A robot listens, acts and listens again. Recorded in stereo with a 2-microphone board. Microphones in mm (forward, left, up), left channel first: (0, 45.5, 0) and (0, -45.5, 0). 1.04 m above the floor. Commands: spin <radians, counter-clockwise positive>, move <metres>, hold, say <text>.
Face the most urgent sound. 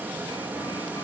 hold
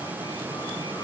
hold
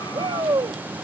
spin -0.87
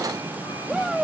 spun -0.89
say Found it: a shout, straight ahead.